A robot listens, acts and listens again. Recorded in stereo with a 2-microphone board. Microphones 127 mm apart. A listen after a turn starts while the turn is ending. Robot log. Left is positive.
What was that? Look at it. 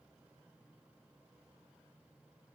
cmd idle
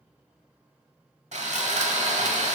note: The sawing: about 65° right or 115° right.
cmd yaw -65
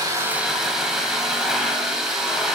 end: Found it: sawing, straight ahead.